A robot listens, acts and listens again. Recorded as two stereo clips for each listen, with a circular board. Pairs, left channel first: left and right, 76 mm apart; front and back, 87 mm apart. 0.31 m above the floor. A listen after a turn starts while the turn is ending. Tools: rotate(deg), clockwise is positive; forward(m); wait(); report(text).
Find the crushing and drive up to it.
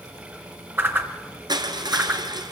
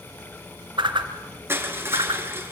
rotate(115)
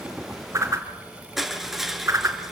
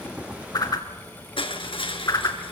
forward(1.0)
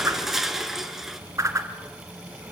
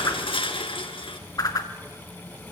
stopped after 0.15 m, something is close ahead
report("Blocked. The crushing is further on, straight ahead.")